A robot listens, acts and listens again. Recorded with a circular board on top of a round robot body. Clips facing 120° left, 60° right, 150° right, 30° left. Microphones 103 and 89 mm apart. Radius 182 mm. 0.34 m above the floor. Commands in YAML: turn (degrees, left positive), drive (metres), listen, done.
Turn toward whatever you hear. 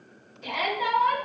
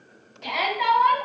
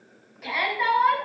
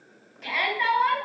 turn: -65
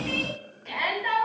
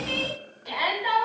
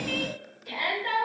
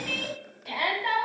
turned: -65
turn: 15
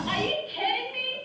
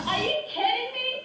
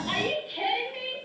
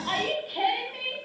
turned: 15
done: "Found it: a shout, straight ahead, over 4 m away."